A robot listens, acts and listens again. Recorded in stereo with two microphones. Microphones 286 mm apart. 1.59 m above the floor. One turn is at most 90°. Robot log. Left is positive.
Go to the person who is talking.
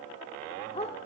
cmd idle
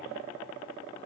cmd idle
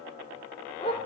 end: I can't make out anyone speaking, only a dog barking.